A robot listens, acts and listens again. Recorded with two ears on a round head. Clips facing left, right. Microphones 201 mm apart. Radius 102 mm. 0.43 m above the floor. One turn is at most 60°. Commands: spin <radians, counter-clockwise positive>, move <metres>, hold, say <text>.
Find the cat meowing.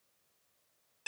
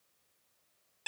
hold
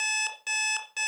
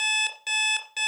hold
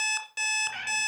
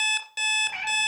spin 0.52
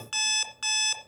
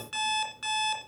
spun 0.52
hold
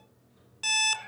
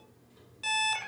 spin -0.70
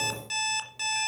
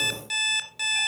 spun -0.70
hold
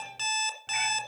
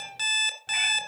say Facing the cat meowing.